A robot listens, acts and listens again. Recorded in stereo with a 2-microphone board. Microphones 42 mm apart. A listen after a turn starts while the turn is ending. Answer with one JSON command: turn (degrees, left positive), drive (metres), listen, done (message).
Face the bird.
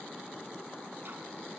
{"listen": true}
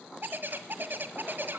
{"turn": -55}
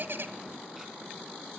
{"listen": true}
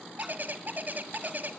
{"turn": -55}
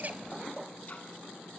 {"listen": true}
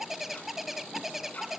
{"done": "Found it: a bird, straight ahead, 1 to 2 m away."}